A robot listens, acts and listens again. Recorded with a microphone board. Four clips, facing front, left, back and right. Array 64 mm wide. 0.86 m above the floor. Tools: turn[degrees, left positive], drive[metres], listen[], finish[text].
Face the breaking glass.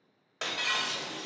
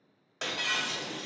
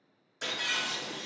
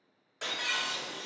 Thought: The breaking glass: 25° left.
Action: turn[25]
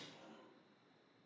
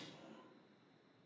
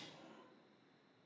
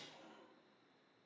Action: finish[Facing where the breaking glass came from. I can't hear it now.]